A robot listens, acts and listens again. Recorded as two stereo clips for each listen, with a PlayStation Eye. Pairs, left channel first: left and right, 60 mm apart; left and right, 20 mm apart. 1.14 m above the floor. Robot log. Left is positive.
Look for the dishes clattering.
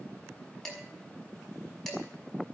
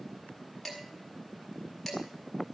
cmd yaw +30
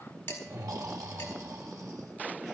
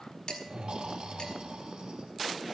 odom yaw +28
note: So it is at 140° left.
cmd yaw +140
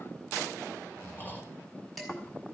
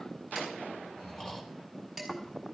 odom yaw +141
end: Facing the dishes clattering, over 4 m away.